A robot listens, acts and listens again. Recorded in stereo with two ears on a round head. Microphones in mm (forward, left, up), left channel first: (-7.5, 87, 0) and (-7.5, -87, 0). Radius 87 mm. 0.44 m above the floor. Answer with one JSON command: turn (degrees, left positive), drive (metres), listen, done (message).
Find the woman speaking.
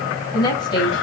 {"turn": 25}
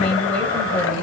{"turn": 10}
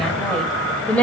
{"turn": 10}
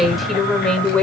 {"done": "Found it: a woman speaking, straight ahead, 1 to 2 m away."}